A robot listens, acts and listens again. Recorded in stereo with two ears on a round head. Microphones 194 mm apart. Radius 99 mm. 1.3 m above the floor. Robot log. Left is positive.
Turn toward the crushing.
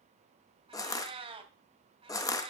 note: The crushing: about 15° left or 165° left.
cmd yaw +15
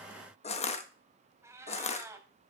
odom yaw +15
note: So it is at 150° left.
cmd yaw +150
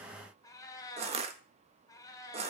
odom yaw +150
note: The crushing is now 30° right.
cmd yaw -30
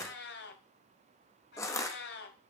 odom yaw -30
note: The crushing is now 15° left.
cmd yaw +15
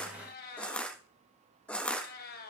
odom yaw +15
end: Facing the crushing.